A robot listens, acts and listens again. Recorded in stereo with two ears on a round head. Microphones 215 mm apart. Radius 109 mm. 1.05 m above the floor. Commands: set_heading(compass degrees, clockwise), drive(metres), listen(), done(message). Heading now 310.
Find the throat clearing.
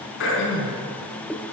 set_heading(255)
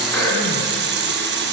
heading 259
listen()
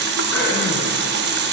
listen()
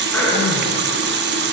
done("Facing the throat clearing, 2 to 4 m away.")